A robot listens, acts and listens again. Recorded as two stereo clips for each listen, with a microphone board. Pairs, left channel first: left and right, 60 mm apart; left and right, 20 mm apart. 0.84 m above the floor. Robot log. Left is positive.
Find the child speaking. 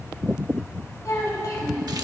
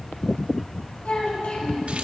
cmd yaw +90
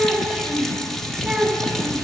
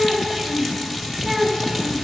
end: Found it: a child speaking, straight ahead.